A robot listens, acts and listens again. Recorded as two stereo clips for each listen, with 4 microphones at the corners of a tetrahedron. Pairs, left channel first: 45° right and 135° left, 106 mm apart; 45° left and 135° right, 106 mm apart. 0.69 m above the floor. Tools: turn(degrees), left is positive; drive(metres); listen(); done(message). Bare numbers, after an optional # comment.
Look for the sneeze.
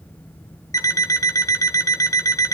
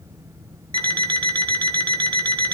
listen()
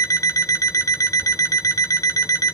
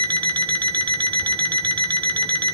listen()
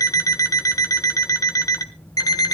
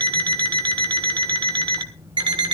done("I can't make out a sneeze to turn to.")